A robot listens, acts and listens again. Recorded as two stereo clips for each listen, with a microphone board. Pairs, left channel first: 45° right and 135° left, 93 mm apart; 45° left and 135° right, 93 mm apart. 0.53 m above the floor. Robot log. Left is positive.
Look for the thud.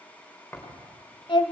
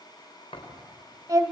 note: The thud: 25° left.
cmd yaw +25
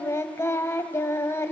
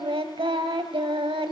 end: I heard a thud from this way, but can't make it out now.